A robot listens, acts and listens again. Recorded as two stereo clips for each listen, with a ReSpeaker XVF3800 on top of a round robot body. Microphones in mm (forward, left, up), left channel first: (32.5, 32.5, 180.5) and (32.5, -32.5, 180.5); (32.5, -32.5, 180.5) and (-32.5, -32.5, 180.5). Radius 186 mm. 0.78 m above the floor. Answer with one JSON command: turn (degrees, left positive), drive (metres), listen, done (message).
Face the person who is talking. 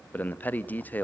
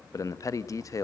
{"turn": 30}
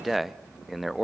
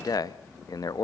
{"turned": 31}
{"done": "Facing the man speaking."}